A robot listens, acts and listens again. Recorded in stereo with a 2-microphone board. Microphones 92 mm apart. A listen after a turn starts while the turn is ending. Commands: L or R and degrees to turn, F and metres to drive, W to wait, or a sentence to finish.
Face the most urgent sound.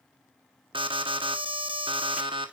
R65
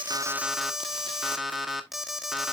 Found it: an alarm, straight ahead, 1 to 2 m away.